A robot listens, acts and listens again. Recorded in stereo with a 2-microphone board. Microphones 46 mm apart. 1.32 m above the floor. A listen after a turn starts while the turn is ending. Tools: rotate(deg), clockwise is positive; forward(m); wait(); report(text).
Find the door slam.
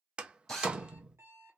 rotate(20)
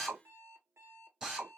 wait()
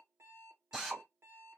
report("I heard a door slam, but can't make it out now. It was about straight ahead or 140° right.")